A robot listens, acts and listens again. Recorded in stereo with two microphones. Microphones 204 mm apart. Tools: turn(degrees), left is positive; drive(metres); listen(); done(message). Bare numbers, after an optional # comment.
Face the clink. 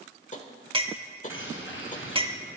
# The clink: about 25° right or 155° right.
turn(-25)
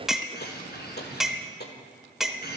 done("Found it: a clink, straight ahead, under 1 m away.")